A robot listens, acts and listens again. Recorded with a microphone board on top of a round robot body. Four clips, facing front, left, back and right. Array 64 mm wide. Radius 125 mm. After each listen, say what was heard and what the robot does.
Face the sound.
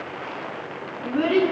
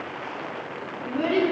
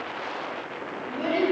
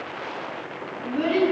Found it: a child speaking, straight ahead, over 4 m away.